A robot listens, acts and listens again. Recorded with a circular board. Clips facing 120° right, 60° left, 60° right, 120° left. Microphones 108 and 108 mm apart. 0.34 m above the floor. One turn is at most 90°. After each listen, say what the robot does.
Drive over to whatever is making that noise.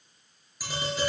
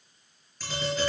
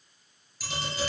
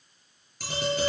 Turn 90° left.
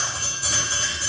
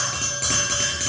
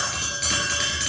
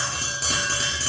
Turn 65° left.
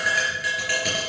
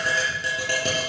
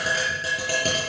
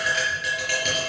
Drive 1.0 m forward.
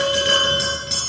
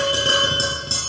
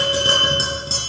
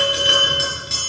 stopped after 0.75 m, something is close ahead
Blocked. The tapping is further on, straight ahead.